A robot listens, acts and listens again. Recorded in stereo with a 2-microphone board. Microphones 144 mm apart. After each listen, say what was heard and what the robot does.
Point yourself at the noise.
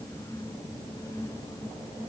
Keep listening.
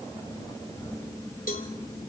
The cowbell: about 70° left or 110° left. Turn 70° left.
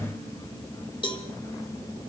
So it is at 35° left. Turn 35° left.
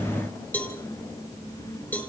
The cowbell is now 10° left. Turn 10° left.
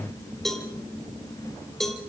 Facing the cowbell, 2 to 4 m away.